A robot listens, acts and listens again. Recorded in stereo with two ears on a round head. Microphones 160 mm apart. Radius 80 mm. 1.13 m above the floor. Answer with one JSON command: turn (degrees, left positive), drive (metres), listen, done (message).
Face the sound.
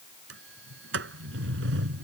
{"turn": -90}
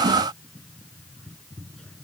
{"done": "Found it: a sliding door, straight ahead."}